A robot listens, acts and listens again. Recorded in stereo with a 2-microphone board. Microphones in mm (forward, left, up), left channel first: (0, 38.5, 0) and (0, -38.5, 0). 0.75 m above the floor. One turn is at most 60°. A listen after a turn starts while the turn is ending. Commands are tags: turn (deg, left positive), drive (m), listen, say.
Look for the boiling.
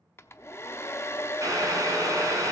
<turn deg="-45"/>
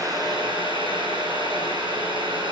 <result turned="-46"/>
<turn deg="-60"/>
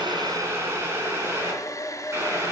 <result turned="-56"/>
<turn deg="-35"/>
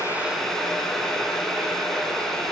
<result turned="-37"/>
<say>Found it: boiling, straight ahead.</say>